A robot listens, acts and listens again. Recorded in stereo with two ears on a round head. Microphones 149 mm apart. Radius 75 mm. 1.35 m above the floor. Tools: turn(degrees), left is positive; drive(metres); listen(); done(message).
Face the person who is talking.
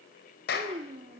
turn(degrees=-35)
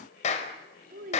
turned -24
turn(degrees=-115)
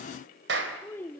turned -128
turn(degrees=15)
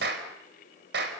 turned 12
listen()
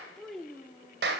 done("Facing the child speaking.")